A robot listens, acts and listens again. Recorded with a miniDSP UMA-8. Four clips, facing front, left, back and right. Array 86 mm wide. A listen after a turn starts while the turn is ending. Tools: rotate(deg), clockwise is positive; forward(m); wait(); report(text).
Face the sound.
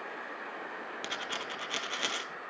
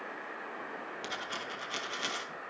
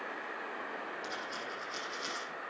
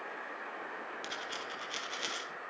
report("Facing the dropped coin.")